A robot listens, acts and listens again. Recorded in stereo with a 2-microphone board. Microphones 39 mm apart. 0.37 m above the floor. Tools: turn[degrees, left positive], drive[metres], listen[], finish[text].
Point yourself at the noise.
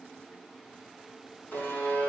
Thought: The buzzer: about 50° left or 130° left.
Action: turn[50]
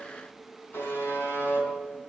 Thought: So it is at 75° left.
Action: turn[75]
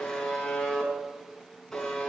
Thought: The buzzer is now 15° left.
Action: turn[15]
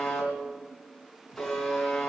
Action: finish[Found it: a buzzer, straight ahead, over 4 m away.]